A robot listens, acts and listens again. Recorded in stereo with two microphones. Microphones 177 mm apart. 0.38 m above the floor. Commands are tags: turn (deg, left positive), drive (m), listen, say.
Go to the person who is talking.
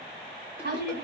<turn deg="-65"/>
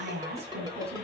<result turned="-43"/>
<turn deg="-70"/>
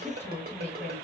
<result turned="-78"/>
<turn deg="10"/>
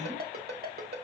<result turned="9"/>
<listen/>
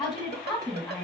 <drive m="1.0"/>
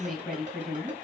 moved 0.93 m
<drive m="1.0"/>
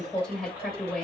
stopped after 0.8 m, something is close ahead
<say>I am next to the woman speaking.</say>